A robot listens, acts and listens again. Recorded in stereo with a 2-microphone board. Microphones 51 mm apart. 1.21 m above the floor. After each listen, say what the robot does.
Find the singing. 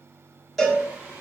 Turn 65° right.
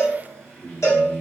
Turn 20° left.
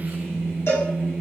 Turn 15° left.
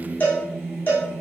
Turn 10° left.
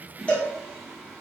Facing the singing.